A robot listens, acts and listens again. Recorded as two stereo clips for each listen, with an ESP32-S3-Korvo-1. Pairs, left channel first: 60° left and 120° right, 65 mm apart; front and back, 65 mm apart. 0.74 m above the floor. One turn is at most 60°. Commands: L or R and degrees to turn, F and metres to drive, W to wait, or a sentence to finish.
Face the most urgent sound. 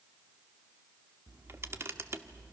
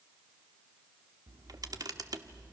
W
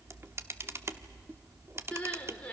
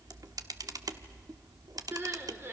L60
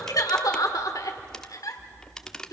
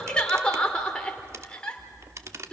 L60
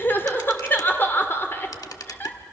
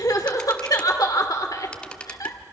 Found it: crying, straight ahead.